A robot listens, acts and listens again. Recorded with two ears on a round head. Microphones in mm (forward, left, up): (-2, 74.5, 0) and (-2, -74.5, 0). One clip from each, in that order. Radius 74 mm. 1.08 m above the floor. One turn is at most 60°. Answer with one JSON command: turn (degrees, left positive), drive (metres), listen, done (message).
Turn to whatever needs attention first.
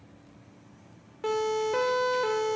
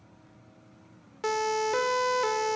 {"turn": -60}
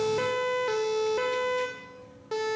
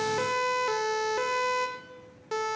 {"turn": -20}
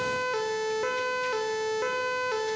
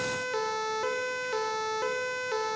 {"done": "Facing the siren."}